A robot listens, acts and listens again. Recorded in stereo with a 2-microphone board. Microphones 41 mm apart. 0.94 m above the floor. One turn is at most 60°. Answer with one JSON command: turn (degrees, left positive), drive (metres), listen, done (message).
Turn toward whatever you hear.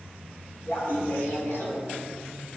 {"turn": 60}
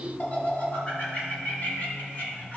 {"turn": 40}
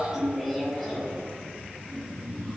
{"done": "Facing the laughter."}